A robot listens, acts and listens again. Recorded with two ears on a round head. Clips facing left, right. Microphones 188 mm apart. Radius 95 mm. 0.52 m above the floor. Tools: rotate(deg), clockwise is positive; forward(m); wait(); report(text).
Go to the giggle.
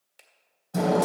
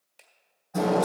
wait()
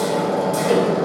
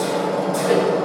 wait()
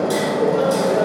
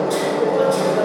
report("I can't make out a giggle to turn to.")